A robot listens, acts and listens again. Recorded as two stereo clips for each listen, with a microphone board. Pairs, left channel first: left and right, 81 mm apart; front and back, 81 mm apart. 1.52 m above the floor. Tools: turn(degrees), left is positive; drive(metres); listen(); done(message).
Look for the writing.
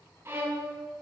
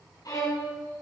listen()
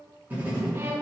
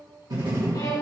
turn(degrees=-155)
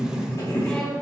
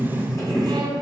turn(degrees=45)
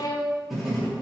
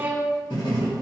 done("Facing the writing, 2 to 4 m away.")